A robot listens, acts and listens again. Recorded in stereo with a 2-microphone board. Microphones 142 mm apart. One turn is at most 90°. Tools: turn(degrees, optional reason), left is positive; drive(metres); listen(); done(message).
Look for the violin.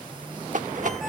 listen()
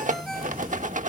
listen()
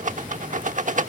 done("I can't make out a violin, only a rattle.")